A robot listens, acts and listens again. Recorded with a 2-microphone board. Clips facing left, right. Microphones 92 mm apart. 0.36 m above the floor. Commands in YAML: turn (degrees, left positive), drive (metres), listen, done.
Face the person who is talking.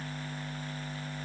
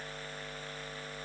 listen: true
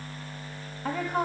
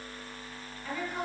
turn: 60
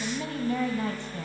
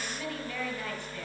turn: 35
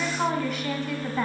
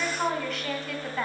done: "Found it: a woman speaking, straight ahead."